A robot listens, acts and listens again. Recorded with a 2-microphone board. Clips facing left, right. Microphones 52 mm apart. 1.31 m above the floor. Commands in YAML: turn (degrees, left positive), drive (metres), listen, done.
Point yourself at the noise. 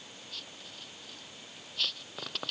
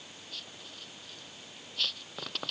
listen: true
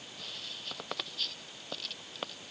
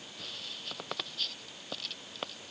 listen: true
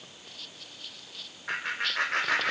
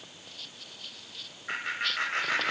turn: 65
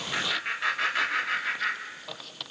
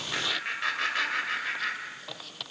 done: "Found it: laughter, straight ahead."